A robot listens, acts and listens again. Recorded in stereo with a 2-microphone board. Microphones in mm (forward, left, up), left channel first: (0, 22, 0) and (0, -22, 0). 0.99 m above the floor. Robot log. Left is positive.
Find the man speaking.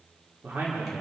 note: The man speaking: about 55° right or 125° right.
cmd yaw -55
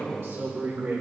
note: So it is at 75° right.
cmd yaw -75
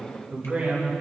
note: The man speaking is now 20° right.
cmd yaw -20
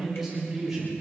note: The man speaking is now 10° right.
cmd yaw -10
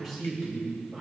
end: Facing the man speaking, over 4 m away.